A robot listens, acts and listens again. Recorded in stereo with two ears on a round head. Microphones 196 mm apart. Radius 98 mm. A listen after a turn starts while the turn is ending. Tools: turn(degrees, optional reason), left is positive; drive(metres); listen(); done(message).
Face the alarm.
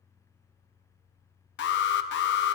turn(degrees=50, reason="The alarm: about 50° left or 130° left.")
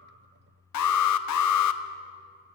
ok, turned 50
turn(degrees=80, reason="So it is at 80° left.")
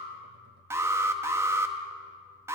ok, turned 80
turn(degrees=-10, reason="The alarm is now 10° right.")
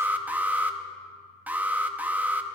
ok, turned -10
done("Facing the alarm, under 1 m away.")